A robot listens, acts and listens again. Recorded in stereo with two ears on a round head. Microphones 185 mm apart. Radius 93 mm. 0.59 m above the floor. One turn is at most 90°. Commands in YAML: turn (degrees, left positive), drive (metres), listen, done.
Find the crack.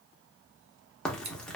turn: 30
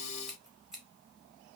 listen: true
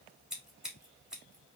done: "I heard a crack, but can't make it out now. It was about 25° right or 145° left."